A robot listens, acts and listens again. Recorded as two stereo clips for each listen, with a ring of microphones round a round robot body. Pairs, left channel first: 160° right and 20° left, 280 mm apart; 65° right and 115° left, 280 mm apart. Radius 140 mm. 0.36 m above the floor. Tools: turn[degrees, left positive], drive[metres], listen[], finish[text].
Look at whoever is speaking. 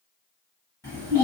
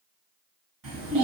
Thought: The child speaking: 125° left.
Action: turn[125]
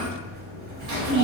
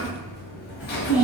Thought: The child speaking is now 30° left.
Action: turn[30]
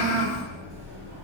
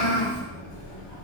Thought: The child speaking is now 15° left.
Action: turn[15]
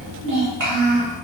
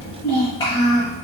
Action: finish[Facing the child speaking, 1 to 2 m away.]